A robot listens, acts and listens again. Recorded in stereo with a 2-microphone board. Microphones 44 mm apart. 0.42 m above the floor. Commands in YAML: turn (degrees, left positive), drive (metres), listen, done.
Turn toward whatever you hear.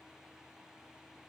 listen: true
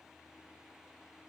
listen: true
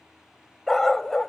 turn: 30
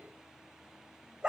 turn: -20
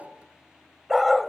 done: "Facing the dog barking."